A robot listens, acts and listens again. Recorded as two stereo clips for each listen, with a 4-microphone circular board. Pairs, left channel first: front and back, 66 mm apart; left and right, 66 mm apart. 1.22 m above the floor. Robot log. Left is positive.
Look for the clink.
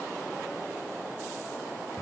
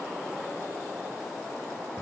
cmd idle
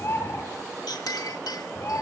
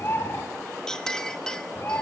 note: The clink: 10° left.
cmd yaw +10
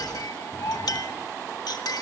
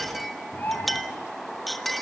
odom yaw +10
end: Found it: a clink, straight ahead.